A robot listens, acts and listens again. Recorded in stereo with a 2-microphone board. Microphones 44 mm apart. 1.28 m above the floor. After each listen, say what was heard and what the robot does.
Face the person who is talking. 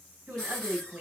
The woman speaking: about 40° right or 140° right. Turn 40° right.
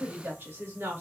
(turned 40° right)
So it is at 115° right. Turn 115° right.
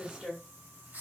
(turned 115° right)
The woman speaking is now 20° right. Turn 20° right.
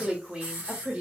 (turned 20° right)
The woman speaking is now 30° right. Turn 30° right.
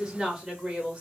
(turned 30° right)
The woman speaking is now 25° right. Turn 25° right.
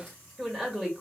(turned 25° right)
The woman speaking is now 10° right. Turn 10° right.
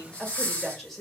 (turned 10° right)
Facing the woman speaking.